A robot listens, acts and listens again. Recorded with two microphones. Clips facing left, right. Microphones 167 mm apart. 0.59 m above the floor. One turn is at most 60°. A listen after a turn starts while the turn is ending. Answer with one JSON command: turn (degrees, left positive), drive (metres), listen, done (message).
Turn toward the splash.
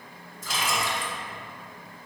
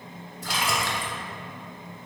{"turn": -60}
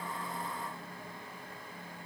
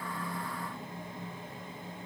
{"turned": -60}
{"listen": true}
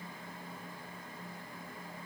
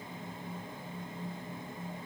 {"done": "I heard a splash, but can't make it out now. It was about 5° right or 55° right."}